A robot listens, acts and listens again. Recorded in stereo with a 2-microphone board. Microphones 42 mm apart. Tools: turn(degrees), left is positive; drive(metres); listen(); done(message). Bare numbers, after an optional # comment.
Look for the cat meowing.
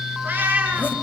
# The cat meowing: about 45° right or 135° right.
turn(-45)
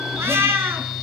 # So it is at 100° right.
turn(-100)
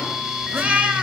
# The cat meowing is now 35° right.
turn(-35)
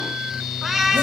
done("Found it: a cat meowing, straight ahead.")